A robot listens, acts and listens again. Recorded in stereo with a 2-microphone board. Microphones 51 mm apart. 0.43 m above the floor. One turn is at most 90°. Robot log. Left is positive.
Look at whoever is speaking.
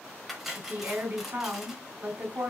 note: The woman speaking: about 35° right or 145° right.
cmd yaw -35
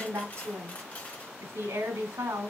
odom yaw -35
note: So it is at 105° right.
cmd yaw -90
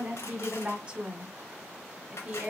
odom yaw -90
note: The woman speaking is now 20° right.
cmd yaw -20
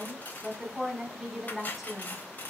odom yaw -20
end: Found it: a woman speaking, straight ahead.